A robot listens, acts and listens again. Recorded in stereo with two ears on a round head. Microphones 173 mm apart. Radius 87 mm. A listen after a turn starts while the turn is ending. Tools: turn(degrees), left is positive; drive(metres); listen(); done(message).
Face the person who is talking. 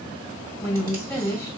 turn(degrees=30)
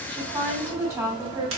turn(degrees=-20)
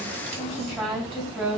done("Facing the woman speaking.")